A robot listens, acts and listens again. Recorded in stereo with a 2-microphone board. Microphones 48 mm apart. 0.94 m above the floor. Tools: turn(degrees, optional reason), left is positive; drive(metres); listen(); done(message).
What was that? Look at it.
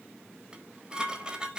turn(degrees=-15, reason="The dishes clattering: about 15° right or 165° right.")
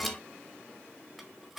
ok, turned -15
done("Facing the dishes clattering.")